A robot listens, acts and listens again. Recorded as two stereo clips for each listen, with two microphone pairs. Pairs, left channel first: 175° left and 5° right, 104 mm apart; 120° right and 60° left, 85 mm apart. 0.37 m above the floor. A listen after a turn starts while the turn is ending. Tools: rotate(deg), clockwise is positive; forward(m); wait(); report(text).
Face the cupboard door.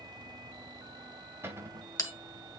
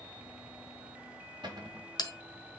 rotate(-60)
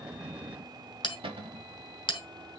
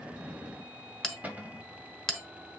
rotate(10)
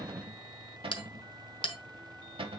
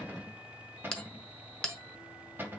report("Found it: a cupboard door, straight ahead.")